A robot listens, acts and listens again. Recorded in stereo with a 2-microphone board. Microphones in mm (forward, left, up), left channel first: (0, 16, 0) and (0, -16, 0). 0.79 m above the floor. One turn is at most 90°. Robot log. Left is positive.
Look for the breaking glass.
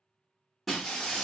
cmd yaw +30
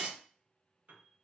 note: So it is at 25° right.
cmd yaw -25
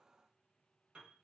end: Facing where the breaking glass came from. I can't hear it now.